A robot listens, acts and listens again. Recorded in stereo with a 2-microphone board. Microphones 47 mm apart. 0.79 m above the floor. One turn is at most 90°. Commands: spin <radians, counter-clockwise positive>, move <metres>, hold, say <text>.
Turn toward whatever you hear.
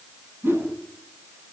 spin -1.05
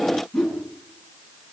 say Facing the whoosh, over 4 m away.